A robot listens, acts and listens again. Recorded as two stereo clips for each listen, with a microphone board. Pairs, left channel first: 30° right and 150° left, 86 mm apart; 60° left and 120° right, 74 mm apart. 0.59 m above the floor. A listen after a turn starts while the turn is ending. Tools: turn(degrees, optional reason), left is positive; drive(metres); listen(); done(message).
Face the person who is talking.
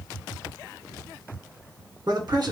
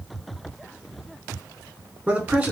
turn(degrees=175, reason="The man speaking: 175° left.")
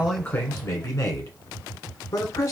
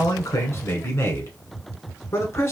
turn(degrees=20, reason="The man speaking is now 20° left.")
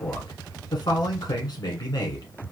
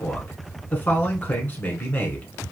done("Facing the man speaking.")